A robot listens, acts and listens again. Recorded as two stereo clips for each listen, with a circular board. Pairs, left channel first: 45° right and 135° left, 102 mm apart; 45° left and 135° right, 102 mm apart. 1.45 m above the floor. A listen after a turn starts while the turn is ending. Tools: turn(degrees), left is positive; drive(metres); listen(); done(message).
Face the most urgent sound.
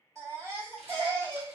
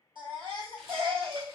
turn(degrees=-165)
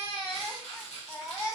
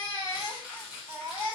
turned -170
done("Facing the baby crying, 1 to 2 m away.")